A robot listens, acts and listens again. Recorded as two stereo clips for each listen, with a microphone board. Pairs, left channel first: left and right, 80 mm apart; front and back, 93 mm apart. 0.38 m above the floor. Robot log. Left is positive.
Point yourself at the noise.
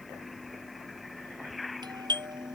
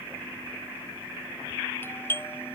note: The doorbell: 65° right.
cmd yaw -65
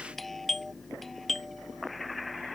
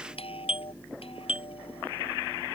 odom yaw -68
end: Facing the doorbell.